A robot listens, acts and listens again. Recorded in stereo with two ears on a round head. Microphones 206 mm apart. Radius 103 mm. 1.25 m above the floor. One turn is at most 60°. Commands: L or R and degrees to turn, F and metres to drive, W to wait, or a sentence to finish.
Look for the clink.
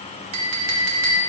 R60
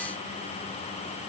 W
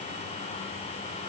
W
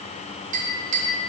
R35
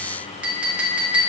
Found it: a clink, straight ahead, 1 to 2 m away.